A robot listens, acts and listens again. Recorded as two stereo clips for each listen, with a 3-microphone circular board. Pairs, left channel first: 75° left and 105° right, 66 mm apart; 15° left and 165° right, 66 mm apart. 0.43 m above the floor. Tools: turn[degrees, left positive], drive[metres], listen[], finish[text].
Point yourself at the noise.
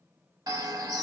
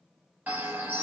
Thought: The bird: 100° right.
Action: turn[-100]
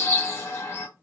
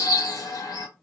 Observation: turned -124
Thought: The bird is now 25° left.
Action: turn[25]
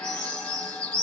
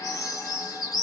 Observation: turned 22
Action: finish[Facing the bird.]